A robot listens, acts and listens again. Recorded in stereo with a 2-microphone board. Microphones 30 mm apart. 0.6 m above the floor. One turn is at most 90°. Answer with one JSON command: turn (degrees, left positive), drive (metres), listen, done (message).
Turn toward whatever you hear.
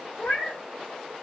{"turn": 90}
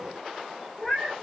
{"done": "Found it: a cat meowing, straight ahead."}